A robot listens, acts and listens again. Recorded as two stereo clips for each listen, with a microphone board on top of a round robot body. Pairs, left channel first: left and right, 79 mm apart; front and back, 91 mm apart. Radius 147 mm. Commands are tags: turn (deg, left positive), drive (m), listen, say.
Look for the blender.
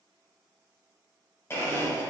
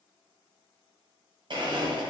<turn deg="150"/>
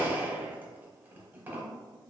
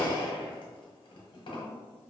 <turn deg="-25"/>
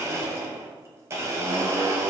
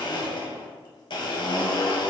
<turn deg="-35"/>
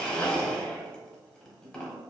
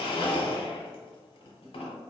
<turn deg="10"/>
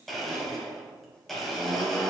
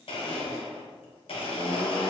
<say>Facing the blender.</say>